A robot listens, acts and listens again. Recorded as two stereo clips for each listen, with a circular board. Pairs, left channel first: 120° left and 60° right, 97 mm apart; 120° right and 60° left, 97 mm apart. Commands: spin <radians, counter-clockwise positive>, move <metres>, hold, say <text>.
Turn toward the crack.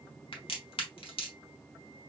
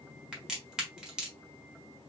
spin 2.53
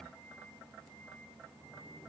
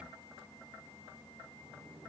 say I heard a crack from this way, but can't make it out now.